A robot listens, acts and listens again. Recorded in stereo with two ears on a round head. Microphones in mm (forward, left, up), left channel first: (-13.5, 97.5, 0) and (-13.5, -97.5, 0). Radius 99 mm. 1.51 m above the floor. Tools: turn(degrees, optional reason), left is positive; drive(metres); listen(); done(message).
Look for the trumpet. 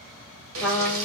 turn(degrees=30)
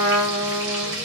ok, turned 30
turn(degrees=-25, reason="So it is at 25° right.")
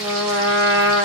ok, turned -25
turn(degrees=-15, reason="The trumpet is now 15° right.")
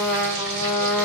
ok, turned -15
done("Found it: a trumpet, straight ahead, 1 to 2 m away.")